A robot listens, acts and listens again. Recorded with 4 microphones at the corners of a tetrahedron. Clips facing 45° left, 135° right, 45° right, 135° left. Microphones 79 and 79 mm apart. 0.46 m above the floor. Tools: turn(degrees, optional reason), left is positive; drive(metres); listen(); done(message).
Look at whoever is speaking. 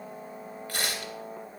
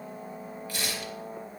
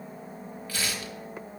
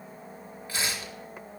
listen()
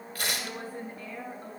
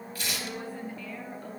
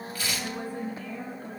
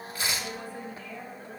turn(degrees=-10, reason="The woman speaking: 10° right.")
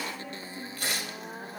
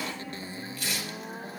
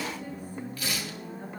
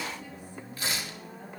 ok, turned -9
listen()
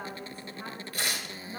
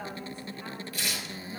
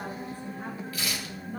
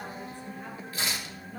done("Found it: a woman speaking, straight ahead.")